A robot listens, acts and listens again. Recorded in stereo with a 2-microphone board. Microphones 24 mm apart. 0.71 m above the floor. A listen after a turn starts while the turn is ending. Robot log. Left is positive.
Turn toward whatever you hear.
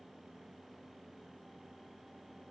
cmd idle
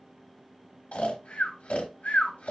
note: The snoring: about 65° left or 115° left.
cmd yaw +65
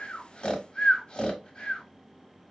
note: So it is at 35° left.
cmd yaw +35
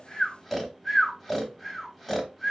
end: Facing the snoring.